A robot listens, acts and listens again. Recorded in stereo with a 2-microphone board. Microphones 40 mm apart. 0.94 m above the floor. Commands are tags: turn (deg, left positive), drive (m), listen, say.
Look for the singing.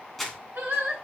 <turn deg="-90"/>
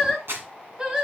<turn deg="-20"/>
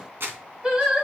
<turn deg="-25"/>
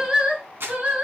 <turn deg="-35"/>
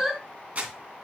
<turn deg="-10"/>
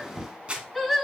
<say>Facing the singing.</say>